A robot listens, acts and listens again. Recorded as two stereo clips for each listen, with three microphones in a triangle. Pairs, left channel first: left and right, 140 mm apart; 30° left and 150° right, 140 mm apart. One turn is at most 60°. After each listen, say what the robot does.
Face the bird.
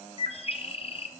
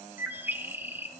Turn 60° left.
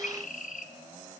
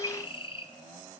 Turn 60° left.
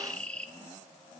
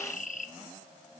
Turn 10° left.
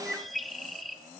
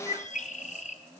Facing the bird, under 1 m away.